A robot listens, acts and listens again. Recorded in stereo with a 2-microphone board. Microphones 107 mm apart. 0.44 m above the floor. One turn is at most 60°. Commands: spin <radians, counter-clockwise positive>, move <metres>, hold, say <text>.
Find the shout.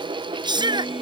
spin -0.70
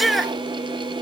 say Facing the shout.